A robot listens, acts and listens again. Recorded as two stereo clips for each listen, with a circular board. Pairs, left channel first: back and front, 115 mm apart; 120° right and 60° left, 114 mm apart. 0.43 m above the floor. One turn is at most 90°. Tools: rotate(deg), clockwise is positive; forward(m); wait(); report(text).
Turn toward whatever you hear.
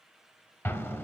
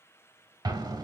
rotate(-90)
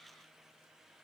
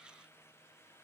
rotate(-20)
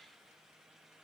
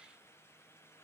report("Facing where the explosion came from. I can't hear it now.")